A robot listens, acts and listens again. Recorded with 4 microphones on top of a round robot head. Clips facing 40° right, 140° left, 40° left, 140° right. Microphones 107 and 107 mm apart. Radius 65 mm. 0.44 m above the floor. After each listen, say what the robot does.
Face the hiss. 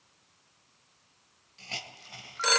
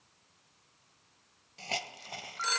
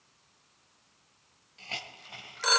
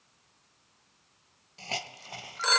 Turn 170° left.
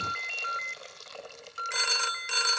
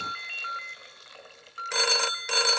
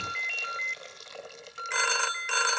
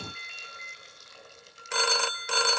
Turn 15° left.
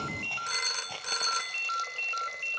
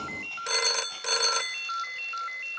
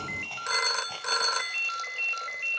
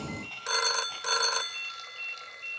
Keep listening.
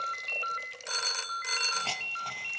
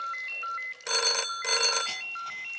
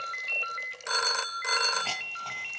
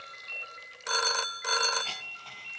Found it: a hiss, straight ahead, 1 to 2 m away.